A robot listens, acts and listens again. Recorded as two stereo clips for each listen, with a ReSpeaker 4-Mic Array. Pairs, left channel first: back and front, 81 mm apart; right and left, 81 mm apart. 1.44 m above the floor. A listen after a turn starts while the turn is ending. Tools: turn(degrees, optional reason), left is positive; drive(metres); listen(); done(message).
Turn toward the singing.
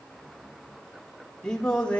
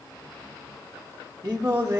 turn(degrees=110, reason="The singing: 110° left.")
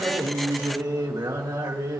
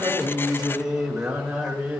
turn(degrees=15, reason="The singing is now 15° left.")
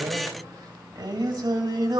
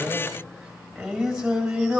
turn(degrees=10, reason="The singing is now 10° left.")
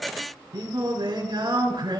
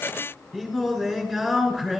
done("Found it: singing, straight ahead, 2 to 4 m away.")